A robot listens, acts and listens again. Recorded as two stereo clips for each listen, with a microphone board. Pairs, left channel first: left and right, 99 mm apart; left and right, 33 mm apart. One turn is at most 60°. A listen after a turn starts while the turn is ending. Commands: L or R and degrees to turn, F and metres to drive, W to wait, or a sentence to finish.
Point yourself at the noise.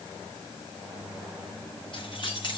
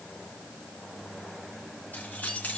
L55
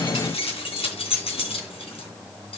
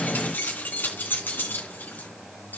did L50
L60
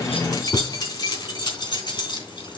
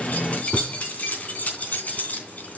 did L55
L50
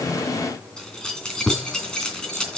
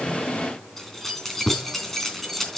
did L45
Facing the keys jangling.